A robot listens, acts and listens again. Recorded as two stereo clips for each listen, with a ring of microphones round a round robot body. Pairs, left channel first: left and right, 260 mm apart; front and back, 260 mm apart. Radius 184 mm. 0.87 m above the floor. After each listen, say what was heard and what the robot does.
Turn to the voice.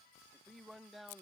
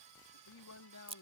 Found it: a man speaking, straight ahead.